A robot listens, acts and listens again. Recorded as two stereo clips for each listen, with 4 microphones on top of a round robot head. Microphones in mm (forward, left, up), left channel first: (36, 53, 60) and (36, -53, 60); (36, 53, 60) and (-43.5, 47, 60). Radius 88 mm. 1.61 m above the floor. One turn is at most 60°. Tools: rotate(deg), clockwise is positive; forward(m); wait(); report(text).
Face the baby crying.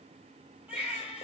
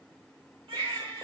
rotate(60)
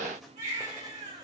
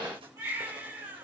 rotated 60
rotate(60)
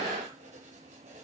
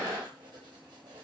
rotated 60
rotate(55)
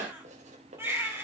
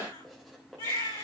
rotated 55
rotate(20)
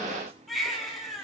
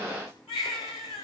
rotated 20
report("Facing the baby crying, over 4 m away.")